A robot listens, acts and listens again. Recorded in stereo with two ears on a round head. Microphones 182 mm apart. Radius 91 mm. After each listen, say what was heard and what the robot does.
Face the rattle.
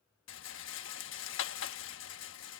The rattle: about 65° left or 115° left. Turn 65° left.
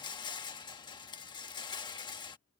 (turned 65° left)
So it is at 25° left. Turn 25° left.
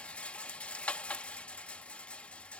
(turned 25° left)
Facing the rattle.